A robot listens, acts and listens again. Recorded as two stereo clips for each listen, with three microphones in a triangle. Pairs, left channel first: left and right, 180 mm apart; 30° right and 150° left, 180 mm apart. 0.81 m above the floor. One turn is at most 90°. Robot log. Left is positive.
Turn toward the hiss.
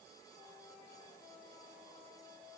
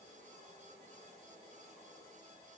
cmd idle
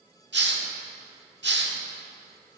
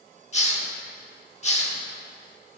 note: The hiss: 85° right.
cmd yaw -85
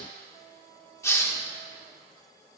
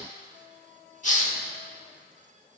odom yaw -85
note: The hiss is now 15° left.
cmd yaw +15
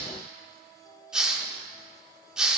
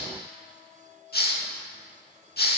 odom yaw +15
end: Facing the hiss.